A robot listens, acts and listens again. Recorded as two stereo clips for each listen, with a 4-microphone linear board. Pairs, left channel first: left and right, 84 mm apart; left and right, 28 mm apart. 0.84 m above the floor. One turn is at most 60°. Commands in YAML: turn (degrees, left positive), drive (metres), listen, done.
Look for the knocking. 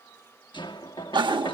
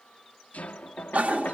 turn: 60
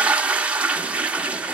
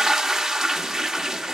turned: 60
listen: true
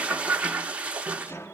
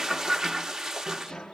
turn: 35
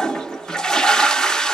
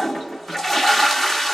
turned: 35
turn: 10
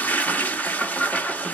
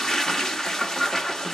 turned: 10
listen: true
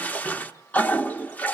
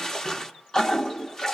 listen: true
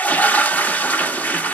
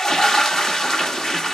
done: "I heard knocking from this way, but can't make it out now."